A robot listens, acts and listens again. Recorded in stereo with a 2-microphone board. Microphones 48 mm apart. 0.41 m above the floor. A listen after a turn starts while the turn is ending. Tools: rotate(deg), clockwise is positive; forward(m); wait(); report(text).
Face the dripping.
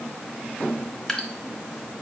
rotate(-30)
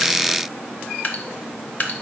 rotate(-140)
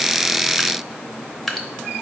report("Facing the dripping.")